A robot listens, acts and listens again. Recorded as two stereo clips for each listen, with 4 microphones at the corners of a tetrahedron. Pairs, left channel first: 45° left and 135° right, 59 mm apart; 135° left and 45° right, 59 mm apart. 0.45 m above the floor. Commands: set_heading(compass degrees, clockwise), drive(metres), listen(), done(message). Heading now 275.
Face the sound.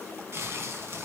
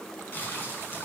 set_heading(90)
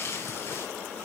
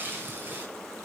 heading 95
done("Found it: crumpling, straight ahead, over 4 m away.")